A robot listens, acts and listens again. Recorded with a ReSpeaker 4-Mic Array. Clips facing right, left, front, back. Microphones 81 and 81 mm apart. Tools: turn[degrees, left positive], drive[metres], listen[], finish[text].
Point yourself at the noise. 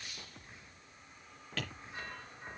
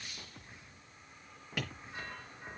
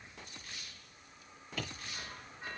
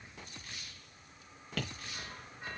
Thought: The tapping: 170° left.
Action: turn[170]
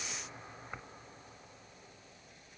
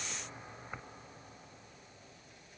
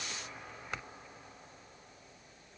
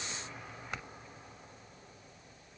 Action: listen[]
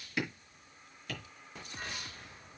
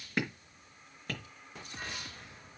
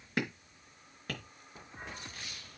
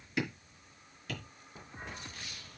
Thought: The tapping is now 40° left.
Action: turn[40]
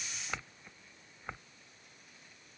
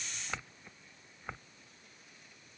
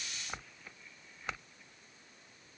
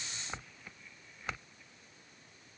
Action: listen[]
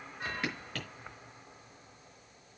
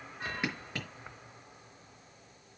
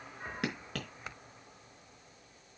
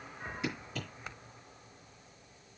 Thought: The tapping is now 20° left.
Action: turn[20]
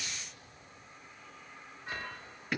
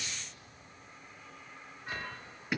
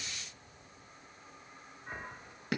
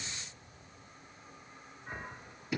Action: finish[Facing the tapping.]